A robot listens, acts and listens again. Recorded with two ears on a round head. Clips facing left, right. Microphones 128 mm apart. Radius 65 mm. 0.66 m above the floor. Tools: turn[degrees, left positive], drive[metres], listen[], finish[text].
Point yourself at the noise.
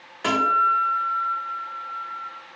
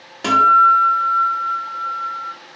Thought: The guitar: about 40° right or 140° right.
Action: turn[-40]
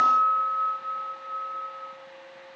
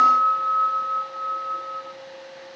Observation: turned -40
Thought: So it is at 95° right.
Action: turn[-95]
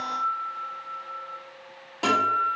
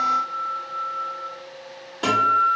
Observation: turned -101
Thought: The guitar is now 10° left.
Action: turn[10]
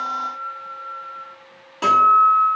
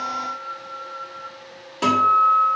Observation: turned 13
Action: finish[Found it: a guitar, straight ahead, under 1 m away.]